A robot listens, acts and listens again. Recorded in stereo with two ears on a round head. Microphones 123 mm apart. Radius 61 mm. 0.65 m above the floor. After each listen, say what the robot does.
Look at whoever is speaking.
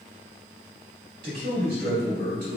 Turn 90° right.
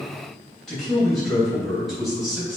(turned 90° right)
Facing the man speaking.